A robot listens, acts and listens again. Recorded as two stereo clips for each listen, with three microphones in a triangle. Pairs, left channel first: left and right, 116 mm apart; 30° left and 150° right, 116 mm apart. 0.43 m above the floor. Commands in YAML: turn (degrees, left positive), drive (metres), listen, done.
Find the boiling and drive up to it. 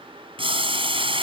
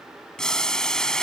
turn: -55
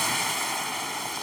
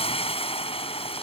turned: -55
drive: 1.0
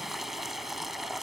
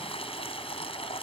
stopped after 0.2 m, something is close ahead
done: "Blocked. The boiling is further on, straight ahead."